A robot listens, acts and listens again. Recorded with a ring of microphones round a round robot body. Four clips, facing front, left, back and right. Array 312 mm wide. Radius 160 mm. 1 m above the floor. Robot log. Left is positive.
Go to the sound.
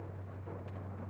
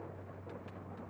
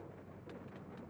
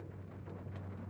cmd idle
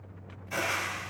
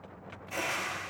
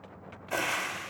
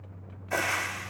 note: The frying: 120° right.
cmd yaw -120
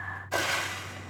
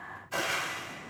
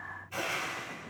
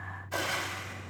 cmd fwd 1.0
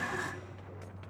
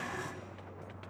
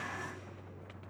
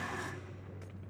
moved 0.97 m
cmd fwd 1.0
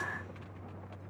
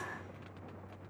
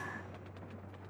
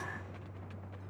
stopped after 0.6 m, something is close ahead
cmd idle
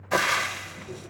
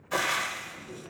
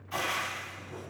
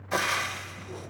end: Arrived at the frying, straight ahead.